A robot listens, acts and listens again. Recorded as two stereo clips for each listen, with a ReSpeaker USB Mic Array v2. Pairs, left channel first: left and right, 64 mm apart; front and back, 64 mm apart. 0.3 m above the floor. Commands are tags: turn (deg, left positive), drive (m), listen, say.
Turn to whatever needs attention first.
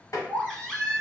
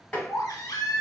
<say>Facing the baby crying.</say>